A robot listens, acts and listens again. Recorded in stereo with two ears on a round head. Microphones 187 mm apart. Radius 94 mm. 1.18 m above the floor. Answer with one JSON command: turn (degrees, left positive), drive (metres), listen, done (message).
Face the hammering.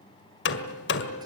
{"turn": 55}
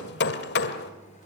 {"turn": 60}
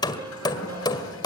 {"turn": 20}
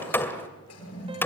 {"turn": 10}
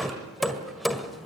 {"done": "Found it: hammering, straight ahead."}